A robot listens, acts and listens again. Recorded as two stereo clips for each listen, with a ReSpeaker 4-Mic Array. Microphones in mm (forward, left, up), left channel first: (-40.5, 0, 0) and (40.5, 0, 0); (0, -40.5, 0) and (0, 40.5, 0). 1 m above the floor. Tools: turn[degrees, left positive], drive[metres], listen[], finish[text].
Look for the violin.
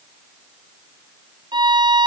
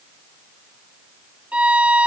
Thought: The violin: 15° left.
Action: turn[15]
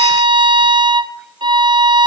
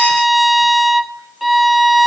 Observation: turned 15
Action: finish[Found it: a violin, straight ahead, under 1 m away.]